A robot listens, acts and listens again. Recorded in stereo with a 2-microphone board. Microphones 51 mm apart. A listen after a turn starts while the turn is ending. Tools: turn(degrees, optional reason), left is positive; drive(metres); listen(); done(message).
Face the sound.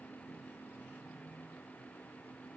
listen()
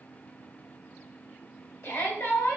turn(degrees=55, reason="The shout: about 55° left or 125° left.")
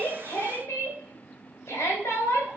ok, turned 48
turn(degrees=75, reason="So it is at 75° left.")
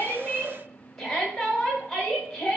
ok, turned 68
done("Found it: a shout, straight ahead, 1 to 2 m away.")